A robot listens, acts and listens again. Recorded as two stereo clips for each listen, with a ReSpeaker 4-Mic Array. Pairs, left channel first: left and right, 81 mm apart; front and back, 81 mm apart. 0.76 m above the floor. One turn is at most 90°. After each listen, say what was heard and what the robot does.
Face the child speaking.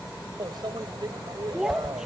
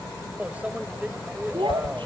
The child speaking: 175° right. Turn 90° right.
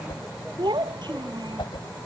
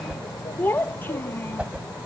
The child speaking is now 65° right. Turn 65° right.
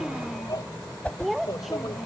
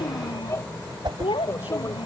Facing the child speaking.